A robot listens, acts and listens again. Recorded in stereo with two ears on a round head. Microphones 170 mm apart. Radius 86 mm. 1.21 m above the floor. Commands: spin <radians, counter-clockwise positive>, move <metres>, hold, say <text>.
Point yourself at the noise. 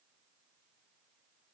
hold
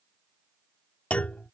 spin 0.52
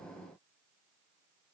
hold
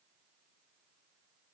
say I heard a clunk, but can't make it out now. It was about 25° right or 145° left.